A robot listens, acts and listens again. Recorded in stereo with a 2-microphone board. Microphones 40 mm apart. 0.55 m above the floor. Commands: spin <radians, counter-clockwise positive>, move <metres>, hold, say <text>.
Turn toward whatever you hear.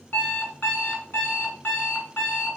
spin 1.05
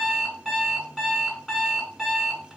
say Facing the alarm clock.